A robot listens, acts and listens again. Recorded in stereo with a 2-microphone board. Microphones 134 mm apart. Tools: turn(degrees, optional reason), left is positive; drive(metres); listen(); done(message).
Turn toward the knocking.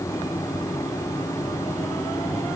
listen()
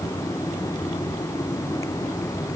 listen()
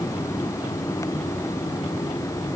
done("I can't make out knocking.")